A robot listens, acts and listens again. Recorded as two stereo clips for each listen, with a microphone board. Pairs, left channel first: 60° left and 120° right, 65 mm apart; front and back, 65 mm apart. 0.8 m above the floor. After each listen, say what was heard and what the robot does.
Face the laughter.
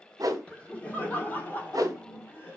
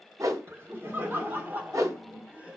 The laughter: 110° left. Turn 110° left.
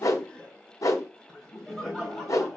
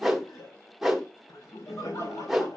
The laughter is now 30° right. Turn 30° right.
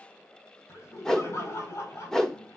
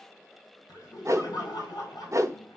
The laughter is now 15° left. Turn 15° left.
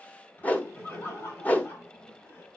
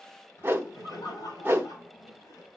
Found it: laughter, straight ahead.